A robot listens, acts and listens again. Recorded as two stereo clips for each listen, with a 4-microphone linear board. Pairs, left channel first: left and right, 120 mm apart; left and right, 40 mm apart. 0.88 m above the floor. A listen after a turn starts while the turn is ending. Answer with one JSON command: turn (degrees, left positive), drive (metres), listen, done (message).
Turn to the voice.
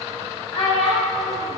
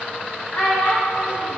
{"turn": 45}
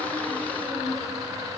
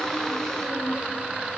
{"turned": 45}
{"listen": true}
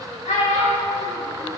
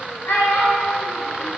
{"turn": 90}
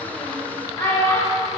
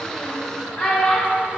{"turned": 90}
{"turn": 25}
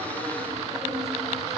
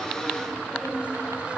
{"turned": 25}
{"listen": true}
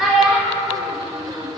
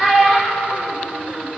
{"done": "Found it: a child speaking, straight ahead."}